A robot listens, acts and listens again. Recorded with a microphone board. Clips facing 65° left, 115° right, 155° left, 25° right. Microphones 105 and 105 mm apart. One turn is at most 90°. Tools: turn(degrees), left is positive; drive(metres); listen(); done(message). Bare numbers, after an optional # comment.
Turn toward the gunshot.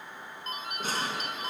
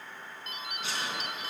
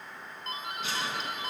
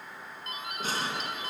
# The gunshot: 25° left.
turn(25)
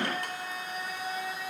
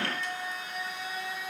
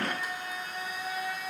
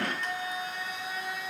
done("Facing where the gunshot came from. I can't hear it now.")